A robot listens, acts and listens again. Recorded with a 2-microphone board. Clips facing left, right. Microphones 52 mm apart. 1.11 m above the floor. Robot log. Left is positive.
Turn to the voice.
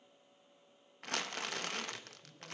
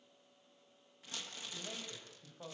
cmd yaw -90
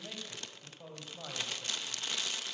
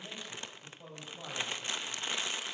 note: So it is at 10° left.
cmd yaw +10
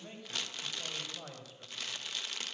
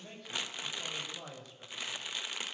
end: Facing the man speaking.